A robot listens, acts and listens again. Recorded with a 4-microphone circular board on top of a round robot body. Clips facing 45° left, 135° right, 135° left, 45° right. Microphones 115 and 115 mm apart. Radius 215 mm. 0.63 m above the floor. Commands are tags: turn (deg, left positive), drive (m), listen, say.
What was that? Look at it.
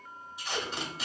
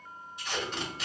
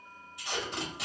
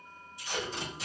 <turn deg="125"/>
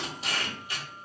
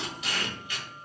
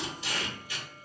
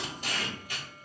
<turn deg="-10"/>
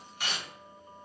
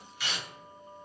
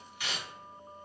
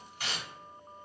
<say>Found it: tape being pulled, straight ahead.</say>